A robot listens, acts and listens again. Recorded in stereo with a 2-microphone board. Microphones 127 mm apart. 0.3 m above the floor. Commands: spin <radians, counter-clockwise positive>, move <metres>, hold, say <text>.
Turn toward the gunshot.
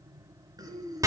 hold
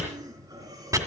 hold
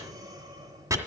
say I can't make out a gunshot, only breathing and chopping.